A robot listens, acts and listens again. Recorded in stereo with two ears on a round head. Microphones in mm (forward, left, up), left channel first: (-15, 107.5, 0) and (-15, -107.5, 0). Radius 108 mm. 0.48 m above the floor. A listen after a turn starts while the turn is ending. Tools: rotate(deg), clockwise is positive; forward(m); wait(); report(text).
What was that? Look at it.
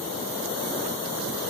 wait()
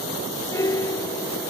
rotate(-30)
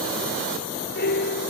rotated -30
rotate(-135)
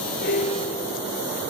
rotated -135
wait()
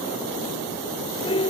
rotate(-20)
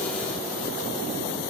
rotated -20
wait()
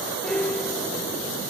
report("Found it: a piano, straight ahead.")